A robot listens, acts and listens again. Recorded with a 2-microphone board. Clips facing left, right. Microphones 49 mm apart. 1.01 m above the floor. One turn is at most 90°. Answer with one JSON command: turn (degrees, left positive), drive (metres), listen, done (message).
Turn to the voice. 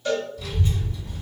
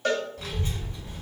{"turn": -60}
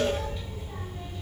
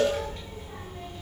{"turn": -65}
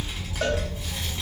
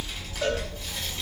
{"turn": 10}
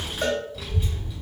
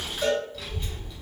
{"done": "Found it: a child speaking, straight ahead."}